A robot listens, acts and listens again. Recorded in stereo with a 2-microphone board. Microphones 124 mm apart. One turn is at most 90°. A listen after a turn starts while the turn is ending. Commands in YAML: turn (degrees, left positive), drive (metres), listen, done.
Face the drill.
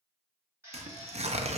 turn: -20
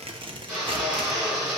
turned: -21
done: "Found it: a drill, straight ahead."